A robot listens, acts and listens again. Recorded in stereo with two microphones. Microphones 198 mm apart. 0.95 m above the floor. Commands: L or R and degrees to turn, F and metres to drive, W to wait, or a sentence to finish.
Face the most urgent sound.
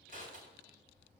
W
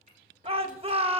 R30
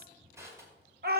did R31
R120
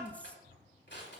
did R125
W
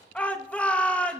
Facing the shout.